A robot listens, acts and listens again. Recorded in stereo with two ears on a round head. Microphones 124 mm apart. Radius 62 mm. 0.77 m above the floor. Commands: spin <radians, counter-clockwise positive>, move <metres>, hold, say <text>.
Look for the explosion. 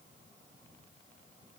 hold
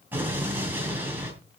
spin -0.52
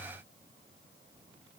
hold
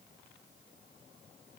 say I heard an explosion, but can't make it out now. It was about 15° left or 135° right.